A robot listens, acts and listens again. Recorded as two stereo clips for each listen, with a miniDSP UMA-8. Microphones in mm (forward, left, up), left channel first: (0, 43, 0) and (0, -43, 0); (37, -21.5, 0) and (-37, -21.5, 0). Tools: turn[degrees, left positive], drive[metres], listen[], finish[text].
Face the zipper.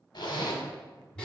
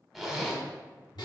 Thought: The zipper: 90° left.
Action: turn[90]
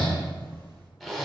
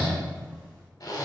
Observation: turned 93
Action: finish[Found it: a zipper, straight ahead, under 1 m away.]